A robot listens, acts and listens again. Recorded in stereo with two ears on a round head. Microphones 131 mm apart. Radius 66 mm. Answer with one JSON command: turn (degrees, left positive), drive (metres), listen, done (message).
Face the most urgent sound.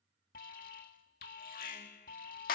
{"turn": 60}
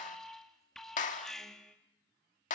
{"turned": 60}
{"done": "Found it: an alarm, straight ahead, 2 to 4 m away."}